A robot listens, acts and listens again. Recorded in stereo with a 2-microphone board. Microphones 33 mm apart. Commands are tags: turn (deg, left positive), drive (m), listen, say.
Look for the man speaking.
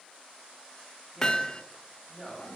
<turn deg="30"/>
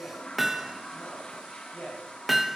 <turn deg="140"/>
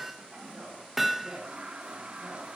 <turn deg="-35"/>
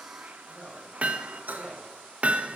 <say>Found it: a man speaking, straight ahead, over 4 m away.</say>